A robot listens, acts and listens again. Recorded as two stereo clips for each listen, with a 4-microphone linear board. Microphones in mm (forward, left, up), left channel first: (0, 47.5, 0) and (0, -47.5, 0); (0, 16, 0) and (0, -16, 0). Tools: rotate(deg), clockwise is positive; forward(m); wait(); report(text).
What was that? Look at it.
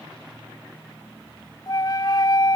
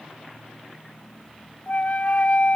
rotate(-45)
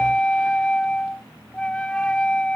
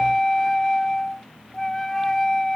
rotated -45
rotate(-15)
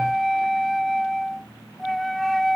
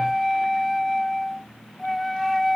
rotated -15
report("Found it: a flute, straight ahead.")